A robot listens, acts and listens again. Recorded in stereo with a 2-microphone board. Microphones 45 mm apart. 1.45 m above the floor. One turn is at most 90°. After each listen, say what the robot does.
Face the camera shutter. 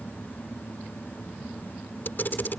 Turn 50° left.
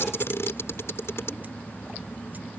Turn 75° left.
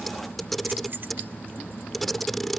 Found it: a camera shutter, straight ahead.